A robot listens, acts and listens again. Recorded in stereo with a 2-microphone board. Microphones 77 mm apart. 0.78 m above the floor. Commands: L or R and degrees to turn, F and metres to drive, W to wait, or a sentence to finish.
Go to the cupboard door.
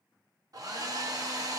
W
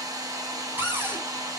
R30
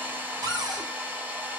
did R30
R115
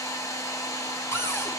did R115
L35
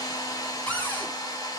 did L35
L20
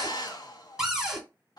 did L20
F1.0
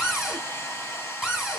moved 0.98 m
F1.0
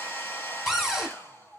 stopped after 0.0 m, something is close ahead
Arrived at the cupboard door, straight ahead.